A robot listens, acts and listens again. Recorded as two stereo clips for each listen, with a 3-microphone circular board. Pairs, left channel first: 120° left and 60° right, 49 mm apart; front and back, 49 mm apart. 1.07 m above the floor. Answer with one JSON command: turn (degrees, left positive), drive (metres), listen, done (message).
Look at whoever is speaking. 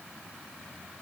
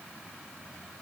{"listen": true}
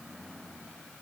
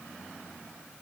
{"listen": true}
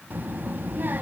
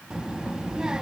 {"turn": -105}
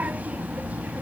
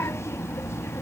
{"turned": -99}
{"done": "Facing the child speaking, under 1 m away."}